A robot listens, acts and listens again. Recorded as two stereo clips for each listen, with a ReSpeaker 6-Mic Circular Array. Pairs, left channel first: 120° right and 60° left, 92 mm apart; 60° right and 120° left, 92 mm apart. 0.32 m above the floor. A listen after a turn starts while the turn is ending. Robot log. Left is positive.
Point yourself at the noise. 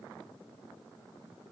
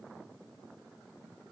cmd idle
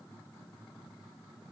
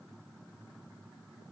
cmd idle
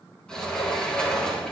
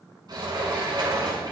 note: The sliding door: 160° left.
cmd yaw +160
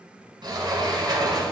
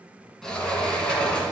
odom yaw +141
note: The sliding door is now 20° left.
cmd yaw +20
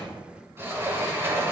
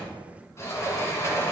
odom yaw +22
end: Found it: a sliding door, straight ahead, 2 to 4 m away.